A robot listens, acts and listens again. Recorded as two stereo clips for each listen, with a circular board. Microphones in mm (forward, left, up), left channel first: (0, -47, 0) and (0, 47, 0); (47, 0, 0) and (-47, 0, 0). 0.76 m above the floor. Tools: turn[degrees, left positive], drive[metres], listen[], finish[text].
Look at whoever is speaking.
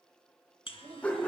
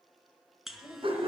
Thought: The child speaking: 105° left.
Action: turn[105]
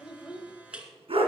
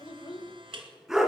Action: finish[Found it: a child speaking, straight ahead.]